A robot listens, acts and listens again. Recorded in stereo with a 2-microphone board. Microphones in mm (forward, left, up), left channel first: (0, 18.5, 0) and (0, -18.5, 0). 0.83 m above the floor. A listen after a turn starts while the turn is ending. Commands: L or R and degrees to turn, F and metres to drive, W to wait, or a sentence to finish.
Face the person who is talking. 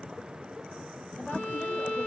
W
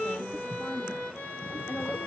L60
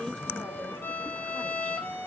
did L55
W
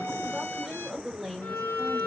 L10
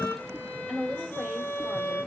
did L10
Facing the woman speaking, 2 to 4 m away.